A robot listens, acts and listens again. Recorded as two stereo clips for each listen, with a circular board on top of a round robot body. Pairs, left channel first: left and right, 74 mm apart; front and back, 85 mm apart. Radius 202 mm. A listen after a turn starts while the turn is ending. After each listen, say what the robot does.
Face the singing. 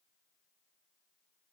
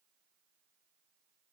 Keep listening.
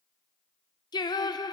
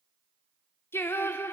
Turn 65° left.
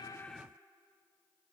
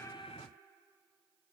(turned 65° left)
Keep listening.
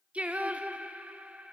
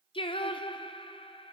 Turn 15° right.
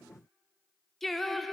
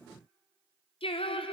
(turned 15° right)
Facing the singing.